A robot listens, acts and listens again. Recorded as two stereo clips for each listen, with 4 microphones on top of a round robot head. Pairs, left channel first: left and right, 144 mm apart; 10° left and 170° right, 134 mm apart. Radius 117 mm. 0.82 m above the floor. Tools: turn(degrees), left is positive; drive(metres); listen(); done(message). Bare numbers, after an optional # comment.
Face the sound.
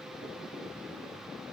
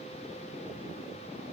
listen()
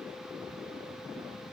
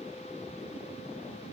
listen()
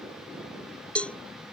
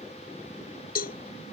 # The cowbell: 10° left.
turn(10)
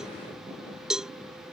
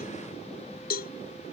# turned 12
done("Found it: a cowbell, straight ahead.")